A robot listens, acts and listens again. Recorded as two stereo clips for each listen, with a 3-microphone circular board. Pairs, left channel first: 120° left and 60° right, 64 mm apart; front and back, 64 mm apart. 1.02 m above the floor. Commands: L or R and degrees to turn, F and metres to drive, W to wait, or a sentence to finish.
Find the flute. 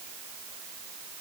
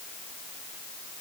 W
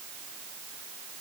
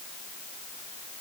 W
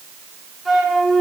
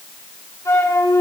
L30
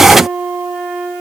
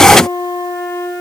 Facing the flute.